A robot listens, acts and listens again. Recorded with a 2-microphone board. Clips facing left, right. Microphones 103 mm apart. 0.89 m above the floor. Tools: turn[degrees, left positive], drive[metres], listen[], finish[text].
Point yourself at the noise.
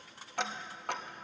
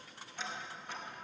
Thought: The ticking: about 70° left or 110° left.
Action: turn[70]
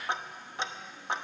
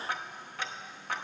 Thought: So it is at 25° left.
Action: turn[25]
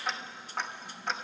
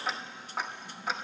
Action: finish[Found it: ticking, straight ahead.]